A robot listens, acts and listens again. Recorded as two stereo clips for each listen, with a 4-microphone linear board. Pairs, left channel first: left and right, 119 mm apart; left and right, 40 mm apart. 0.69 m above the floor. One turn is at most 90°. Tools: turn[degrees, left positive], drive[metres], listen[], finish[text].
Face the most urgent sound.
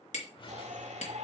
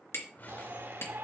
Thought: The shout: about 70° right or 110° right.
Action: turn[-70]
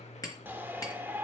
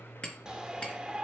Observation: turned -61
Thought: So it is at 20° right.
Action: turn[-20]
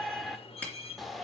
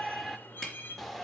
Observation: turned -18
Action: finish[Facing the shout, 1 to 2 m away.]